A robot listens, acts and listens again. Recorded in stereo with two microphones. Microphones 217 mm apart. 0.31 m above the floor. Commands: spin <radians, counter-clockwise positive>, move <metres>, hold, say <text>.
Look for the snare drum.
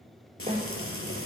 spin -0.44
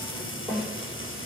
say Facing the snare drum, over 4 m away.